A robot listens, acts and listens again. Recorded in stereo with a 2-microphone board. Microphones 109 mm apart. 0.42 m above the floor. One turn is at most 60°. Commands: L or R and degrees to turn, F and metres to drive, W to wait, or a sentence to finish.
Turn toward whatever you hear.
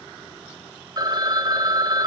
R40
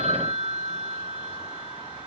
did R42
R60
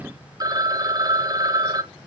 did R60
R40
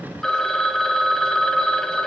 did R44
Found it: a phone ringing, straight ahead.